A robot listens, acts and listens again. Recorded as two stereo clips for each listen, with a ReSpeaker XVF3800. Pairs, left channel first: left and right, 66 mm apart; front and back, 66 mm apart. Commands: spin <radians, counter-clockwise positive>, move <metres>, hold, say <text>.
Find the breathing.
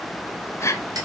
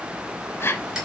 spin 0.87
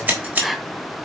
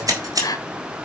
say Found it: breathing, straight ahead, 1 to 2 m away.